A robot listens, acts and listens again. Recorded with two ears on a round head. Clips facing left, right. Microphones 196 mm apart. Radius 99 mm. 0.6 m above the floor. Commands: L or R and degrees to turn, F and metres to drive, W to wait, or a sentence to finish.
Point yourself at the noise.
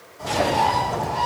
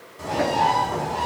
R60
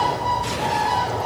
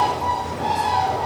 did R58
R40
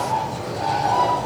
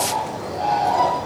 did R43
Facing the bird.